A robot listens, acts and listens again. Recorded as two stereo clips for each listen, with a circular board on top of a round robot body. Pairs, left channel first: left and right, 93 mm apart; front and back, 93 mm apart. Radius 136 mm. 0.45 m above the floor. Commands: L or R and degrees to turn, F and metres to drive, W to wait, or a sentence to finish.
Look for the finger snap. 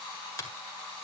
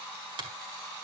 L150
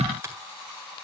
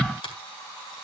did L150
R25
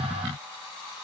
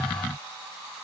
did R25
W
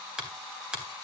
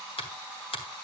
R10
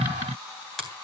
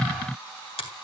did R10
Facing the finger snap.